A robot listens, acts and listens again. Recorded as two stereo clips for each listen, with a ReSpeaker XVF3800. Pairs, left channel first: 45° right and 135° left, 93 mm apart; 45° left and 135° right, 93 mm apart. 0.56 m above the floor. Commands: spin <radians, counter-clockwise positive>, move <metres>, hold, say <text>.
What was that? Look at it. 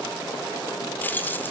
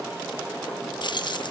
spin 0.35
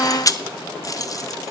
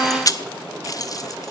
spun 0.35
say Facing the keys jangling.